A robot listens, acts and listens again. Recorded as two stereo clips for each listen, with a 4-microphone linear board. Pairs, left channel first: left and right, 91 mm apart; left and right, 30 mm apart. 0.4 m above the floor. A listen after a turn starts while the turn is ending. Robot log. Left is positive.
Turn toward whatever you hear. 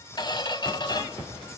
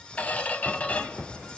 note: The squeak: about 55° left or 125° left.
cmd yaw +55
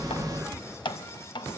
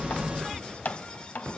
note: So it is at 65° left.
cmd yaw +65
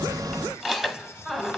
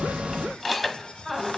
end: Facing the squeak.